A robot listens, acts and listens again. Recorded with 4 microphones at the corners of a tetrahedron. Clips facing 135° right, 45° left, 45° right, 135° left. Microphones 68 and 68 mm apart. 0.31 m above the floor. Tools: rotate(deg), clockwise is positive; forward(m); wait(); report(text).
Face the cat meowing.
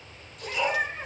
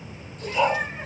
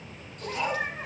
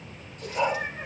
rotate(45)
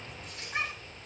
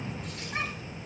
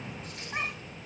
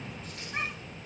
rotate(20)
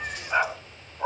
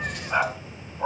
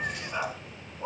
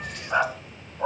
wait()
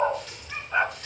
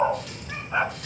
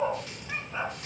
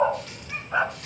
wait()
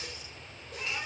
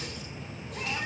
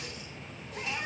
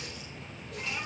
rotate(-10)
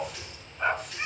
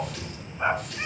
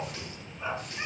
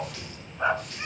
report("Facing the cat meowing, over 4 m away.")